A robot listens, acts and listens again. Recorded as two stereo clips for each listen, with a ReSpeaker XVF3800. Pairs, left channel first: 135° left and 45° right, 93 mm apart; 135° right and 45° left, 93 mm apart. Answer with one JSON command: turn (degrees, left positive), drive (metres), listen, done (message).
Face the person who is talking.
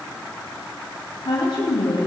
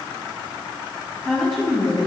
{"turn": 135}
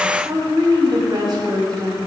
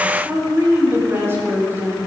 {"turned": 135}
{"turn": -15}
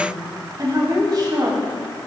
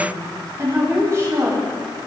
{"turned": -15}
{"turn": -10}
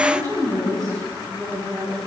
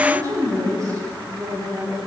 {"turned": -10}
{"done": "Found it: a woman speaking, straight ahead, over 4 m away."}